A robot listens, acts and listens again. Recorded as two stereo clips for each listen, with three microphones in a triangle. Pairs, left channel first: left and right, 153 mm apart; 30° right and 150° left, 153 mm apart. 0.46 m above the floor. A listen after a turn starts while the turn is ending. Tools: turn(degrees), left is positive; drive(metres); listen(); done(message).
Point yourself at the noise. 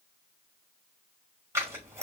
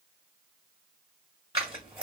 turn(degrees=-160)
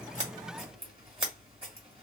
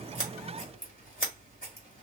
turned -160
turn(degrees=-40)
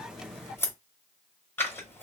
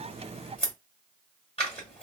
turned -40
turn(degrees=15)
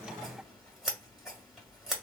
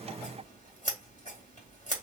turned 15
done("Found it: scissors, straight ahead.")